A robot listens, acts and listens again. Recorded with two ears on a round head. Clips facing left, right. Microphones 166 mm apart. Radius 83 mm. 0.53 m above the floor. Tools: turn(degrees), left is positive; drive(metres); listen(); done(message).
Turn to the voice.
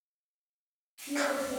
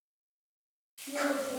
turn(degrees=-30)
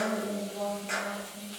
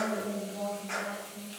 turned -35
turn(degrees=-135)
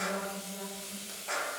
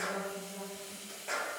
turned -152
turn(degrees=15)
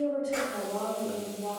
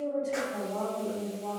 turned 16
done("Facing the woman speaking.")